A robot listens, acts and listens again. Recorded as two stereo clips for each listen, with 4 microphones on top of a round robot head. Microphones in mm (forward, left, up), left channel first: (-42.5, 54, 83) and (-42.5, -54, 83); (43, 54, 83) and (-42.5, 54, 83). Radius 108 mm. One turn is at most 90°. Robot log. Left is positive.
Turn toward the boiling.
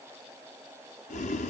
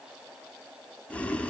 note: The boiling: 75° left.
cmd yaw +75
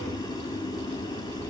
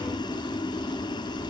note: The boiling is now 30° left.
cmd yaw +30
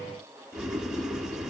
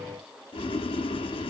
end: Found it: boiling, straight ahead.